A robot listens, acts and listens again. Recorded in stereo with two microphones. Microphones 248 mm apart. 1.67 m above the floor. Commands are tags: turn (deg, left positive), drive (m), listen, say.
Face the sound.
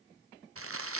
<turn deg="-60"/>
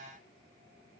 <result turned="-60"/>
<say>Found it: crumpling, straight ahead.</say>